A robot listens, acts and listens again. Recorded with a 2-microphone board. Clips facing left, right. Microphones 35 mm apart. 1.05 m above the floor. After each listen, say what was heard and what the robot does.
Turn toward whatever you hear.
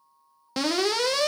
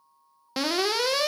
Turn 30° right.
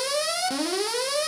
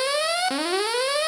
So it is at 145° right. Turn 145° right.
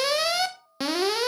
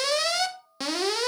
The alarm is now 10° left. Turn 10° left.
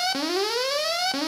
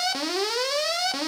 Facing the alarm.